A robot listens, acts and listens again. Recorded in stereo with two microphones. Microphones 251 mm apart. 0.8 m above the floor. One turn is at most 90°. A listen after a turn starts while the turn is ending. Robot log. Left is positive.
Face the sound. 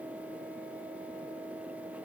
cmd idle
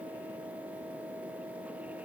cmd idle
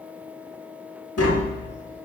note: The tapping: about 65° left or 115° left.
cmd yaw +65
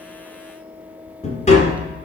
note: So it is at 30° left.
cmd yaw +30
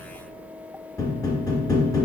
note: The tapping is now 15° left.
cmd yaw +15
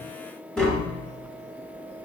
end: Facing the tapping.